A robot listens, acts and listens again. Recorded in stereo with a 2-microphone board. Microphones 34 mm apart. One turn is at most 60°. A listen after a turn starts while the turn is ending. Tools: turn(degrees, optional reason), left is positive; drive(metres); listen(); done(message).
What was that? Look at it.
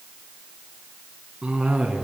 turn(degrees=-25, reason="The cough: about 25° right or 155° right.")
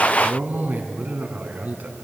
turn(degrees=-60, reason="So it is at 125° right.")
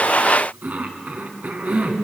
turn(degrees=-60, reason="The cough is now 60° right.")
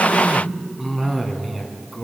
turn(degrees=-10, reason="The cough is now 10° right.")
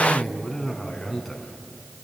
done("Found it: a cough, straight ahead.")